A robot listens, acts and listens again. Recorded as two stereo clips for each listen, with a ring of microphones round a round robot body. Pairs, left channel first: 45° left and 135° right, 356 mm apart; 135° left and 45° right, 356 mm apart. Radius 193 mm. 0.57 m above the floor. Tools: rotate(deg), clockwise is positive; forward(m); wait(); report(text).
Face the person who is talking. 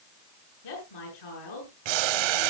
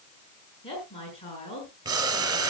rotate(-60)
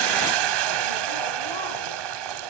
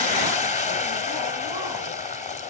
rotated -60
wait()
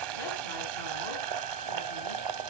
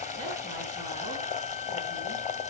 wait()
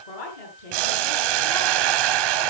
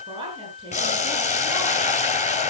rotate(-30)
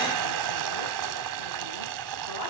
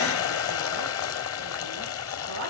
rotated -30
wait()
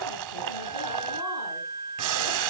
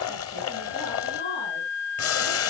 wait()
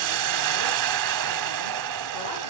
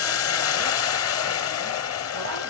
report("Facing where the woman speaking came from. I can't hear it now.")